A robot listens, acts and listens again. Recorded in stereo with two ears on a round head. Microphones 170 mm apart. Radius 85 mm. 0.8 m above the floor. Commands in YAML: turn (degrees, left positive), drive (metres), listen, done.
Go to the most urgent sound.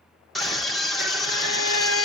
turn: 30
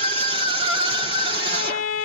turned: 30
turn: -30
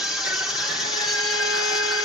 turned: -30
drive: 1.0
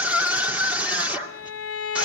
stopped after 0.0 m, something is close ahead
turn: -10
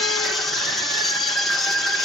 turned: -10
done: "Blocked. The scream is further on, straight ahead."